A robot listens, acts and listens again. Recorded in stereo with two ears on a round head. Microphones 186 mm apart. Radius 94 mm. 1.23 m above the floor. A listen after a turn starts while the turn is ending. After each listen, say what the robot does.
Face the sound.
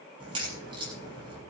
Turn 25° right.
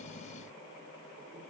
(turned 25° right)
Keep listening.
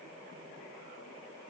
I heard a crack, but can't make it out now. It was about straight ahead or 130° right.